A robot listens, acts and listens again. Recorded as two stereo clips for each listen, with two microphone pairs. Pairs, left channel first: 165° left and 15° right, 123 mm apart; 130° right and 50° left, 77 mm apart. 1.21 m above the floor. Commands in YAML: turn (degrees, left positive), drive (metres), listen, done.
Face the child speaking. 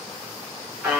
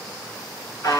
listen: true
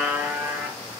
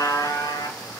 listen: true
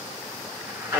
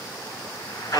done: "I can't make out a child speaking, only a buzzer."